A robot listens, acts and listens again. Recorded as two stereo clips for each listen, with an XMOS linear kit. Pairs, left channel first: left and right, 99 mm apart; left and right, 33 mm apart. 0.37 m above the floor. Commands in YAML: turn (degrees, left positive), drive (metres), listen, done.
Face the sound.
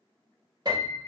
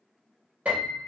turn: -50
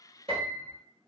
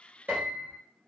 turn: -80
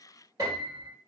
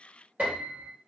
turn: -40
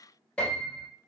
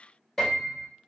turn: 10
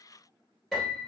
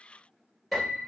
done: "Found it: a piano, straight ahead."